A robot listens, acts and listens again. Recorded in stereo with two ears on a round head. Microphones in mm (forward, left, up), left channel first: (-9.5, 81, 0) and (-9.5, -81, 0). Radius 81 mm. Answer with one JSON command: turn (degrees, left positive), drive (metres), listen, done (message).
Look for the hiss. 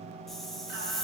{"turn": 30}
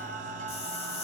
{"turn": 145}
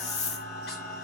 {"turn": 40}
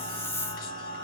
{"turn": 15}
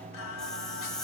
{"done": "Facing the hiss."}